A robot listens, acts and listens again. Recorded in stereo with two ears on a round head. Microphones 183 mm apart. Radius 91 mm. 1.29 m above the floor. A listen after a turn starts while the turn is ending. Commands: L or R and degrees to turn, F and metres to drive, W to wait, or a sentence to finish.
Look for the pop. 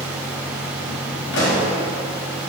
L55
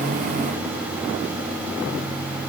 W
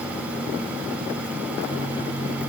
I heard a pop, but can't make it out now. It was about straight ahead or 70° left.